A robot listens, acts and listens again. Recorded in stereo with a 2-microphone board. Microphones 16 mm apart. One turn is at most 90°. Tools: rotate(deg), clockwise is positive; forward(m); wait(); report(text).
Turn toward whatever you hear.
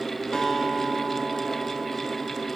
rotate(-70)
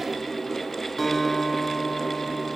rotate(-20)
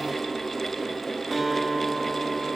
report("Found it: a guitar, straight ahead, 1 to 2 m away.")